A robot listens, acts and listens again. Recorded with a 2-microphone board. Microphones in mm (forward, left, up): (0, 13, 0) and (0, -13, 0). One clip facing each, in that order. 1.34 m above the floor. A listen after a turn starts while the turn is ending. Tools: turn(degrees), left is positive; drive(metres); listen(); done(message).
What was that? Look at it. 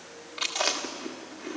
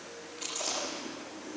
turn(degrees=60)
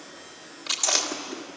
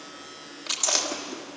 done("Facing the chewing.")